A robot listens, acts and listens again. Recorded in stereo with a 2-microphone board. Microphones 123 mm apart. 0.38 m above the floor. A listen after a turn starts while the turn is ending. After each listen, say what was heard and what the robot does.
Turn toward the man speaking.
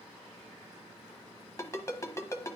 Keep listening.
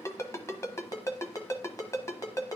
Keep listening.
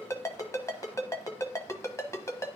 I can't make out a man speaking to turn to.